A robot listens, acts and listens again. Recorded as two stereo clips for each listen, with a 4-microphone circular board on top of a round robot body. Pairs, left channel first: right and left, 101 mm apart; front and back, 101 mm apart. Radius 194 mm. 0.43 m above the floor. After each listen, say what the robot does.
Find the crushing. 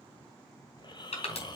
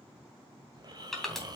Turn 90° right.
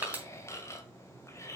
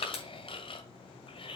Turn 15° left.
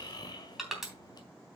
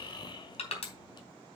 Found it: crushing, straight ahead.